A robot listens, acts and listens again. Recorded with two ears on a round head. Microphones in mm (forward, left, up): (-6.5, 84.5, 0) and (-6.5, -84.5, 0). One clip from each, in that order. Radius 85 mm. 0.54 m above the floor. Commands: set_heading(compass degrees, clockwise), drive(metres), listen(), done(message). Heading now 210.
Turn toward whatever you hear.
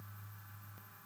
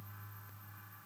listen()
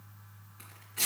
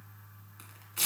set_heading(245)
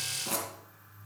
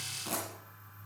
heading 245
done("Found it: tearing paper, straight ahead.")